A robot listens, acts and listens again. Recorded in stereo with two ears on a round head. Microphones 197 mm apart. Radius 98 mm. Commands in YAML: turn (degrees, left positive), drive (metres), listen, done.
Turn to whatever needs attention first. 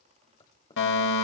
turn: 60
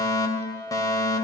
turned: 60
turn: 20
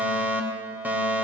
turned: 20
turn: -10
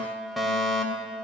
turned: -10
done: "Found it: a fire alarm, straight ahead."